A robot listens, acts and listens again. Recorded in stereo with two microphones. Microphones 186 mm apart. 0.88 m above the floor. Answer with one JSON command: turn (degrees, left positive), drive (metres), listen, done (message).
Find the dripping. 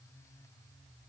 {"listen": true}
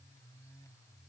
{"listen": true}
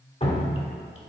{"turn": 35}
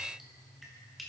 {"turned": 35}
{"listen": true}
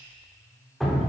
{"done": "Facing the dripping."}